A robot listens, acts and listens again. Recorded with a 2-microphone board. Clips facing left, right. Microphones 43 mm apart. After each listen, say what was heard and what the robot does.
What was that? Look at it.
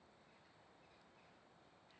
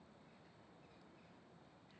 Keep listening.
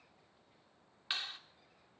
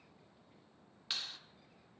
The clap: about 25° left or 155° left. Turn 25° left.
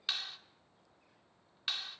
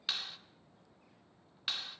Found it: a clap, straight ahead.